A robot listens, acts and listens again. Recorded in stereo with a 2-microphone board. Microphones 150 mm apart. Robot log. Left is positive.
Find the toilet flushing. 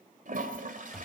note: The toilet flushing: about 65° right or 115° right.
cmd yaw -65
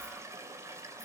note: So it is at 20° right.
cmd yaw -20
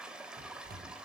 end: Found it: a toilet flushing, straight ahead.